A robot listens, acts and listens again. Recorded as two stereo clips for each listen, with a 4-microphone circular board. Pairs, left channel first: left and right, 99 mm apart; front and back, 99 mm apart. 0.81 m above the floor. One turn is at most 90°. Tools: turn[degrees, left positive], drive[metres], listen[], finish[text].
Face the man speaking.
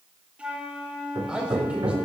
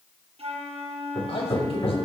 Thought: The man speaking: 10° right.
Action: turn[-10]
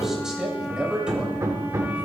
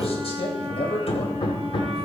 Thought: The man speaking is now 10° right.
Action: turn[-10]
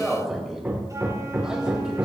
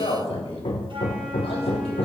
Action: finish[Found it: a man speaking, straight ahead, over 4 m away.]